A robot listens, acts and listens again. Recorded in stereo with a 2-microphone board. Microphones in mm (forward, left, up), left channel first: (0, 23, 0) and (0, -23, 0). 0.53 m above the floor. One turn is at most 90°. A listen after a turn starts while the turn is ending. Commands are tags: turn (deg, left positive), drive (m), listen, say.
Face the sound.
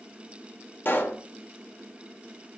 <turn deg="50"/>
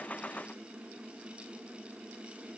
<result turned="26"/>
<listen/>
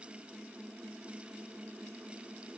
<say>I heard a pop, but can't make it out now. It was about 25° left or 105° left.</say>